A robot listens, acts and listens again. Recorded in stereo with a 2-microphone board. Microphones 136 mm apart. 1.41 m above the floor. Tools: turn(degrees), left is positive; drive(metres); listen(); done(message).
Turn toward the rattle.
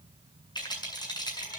turn(degrees=30)
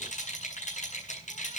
turn(degrees=120)
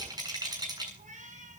turn(degrees=-30)
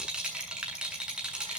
done("Found it: a rattle, straight ahead, over 4 m away.")